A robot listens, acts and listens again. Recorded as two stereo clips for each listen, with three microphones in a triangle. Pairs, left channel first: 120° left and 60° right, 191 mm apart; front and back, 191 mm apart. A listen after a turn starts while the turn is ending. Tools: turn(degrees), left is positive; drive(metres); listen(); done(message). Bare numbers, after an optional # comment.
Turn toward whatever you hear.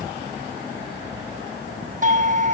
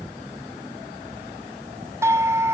# The doorbell: 105° right.
turn(-105)
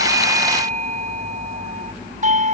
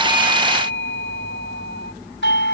# The doorbell is now 10° right.
turn(-10)
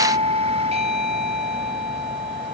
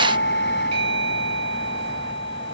done("Found it: a doorbell, straight ahead.")